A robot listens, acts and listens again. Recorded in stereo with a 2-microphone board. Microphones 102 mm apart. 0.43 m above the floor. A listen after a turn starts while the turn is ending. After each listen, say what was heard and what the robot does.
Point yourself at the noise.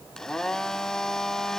Turn 30° left.
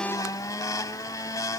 So it is at 145° left. Turn 145° left.
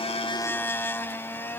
The blender is now 20° left. Turn 20° left.
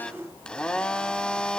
The blender is now 10° left. Turn 10° left.
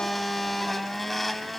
Found it: a blender, straight ahead.